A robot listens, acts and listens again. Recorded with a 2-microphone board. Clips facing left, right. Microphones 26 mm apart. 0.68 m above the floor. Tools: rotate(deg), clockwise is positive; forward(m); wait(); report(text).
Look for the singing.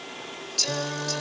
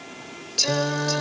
rotate(20)
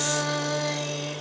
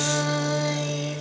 report("Facing the singing.")